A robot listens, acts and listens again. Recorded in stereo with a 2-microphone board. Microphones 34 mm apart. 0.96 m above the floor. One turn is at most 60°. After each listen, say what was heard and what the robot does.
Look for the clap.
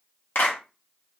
The clap: about 70° left or 110° left. Turn 60° left.
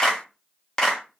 So it is at 15° left. Turn 15° left.
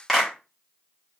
Found it: a clap, straight ahead, under 1 m away.